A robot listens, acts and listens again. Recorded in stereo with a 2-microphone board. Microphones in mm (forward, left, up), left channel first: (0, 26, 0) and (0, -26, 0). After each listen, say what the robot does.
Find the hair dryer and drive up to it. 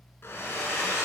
Turn 50° left.
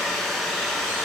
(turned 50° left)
Drive 1.0 m forward.
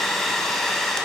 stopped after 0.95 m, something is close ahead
Turn 10° left.
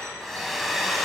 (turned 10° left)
I am next to the hair dryer.